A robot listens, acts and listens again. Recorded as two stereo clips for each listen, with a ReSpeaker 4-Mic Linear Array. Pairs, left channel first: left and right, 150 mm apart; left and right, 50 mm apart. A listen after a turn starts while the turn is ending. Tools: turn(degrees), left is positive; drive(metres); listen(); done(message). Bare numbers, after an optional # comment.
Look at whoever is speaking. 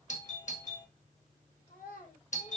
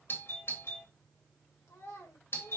# The child speaking: about 70° left or 110° left.
turn(70)
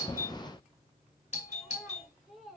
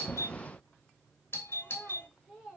done("Found it: a child speaking, straight ahead.")